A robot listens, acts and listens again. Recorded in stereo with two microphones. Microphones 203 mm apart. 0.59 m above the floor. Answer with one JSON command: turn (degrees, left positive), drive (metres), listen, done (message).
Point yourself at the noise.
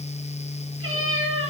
{"turn": -90}
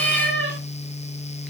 {"done": "Found it: a cat meowing, straight ahead, over 4 m away."}